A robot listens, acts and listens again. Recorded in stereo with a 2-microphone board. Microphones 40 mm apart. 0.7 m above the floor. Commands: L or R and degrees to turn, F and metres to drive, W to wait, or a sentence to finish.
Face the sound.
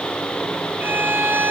R65
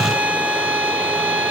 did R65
R45
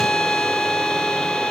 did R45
L15
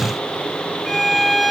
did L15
Facing the violin, 1 to 2 m away.